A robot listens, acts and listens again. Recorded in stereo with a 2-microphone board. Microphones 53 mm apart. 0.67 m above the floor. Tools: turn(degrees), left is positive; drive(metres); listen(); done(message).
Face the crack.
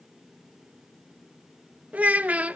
listen()
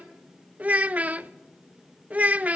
listen()
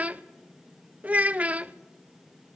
done("I can't make out a crack, only a child speaking.")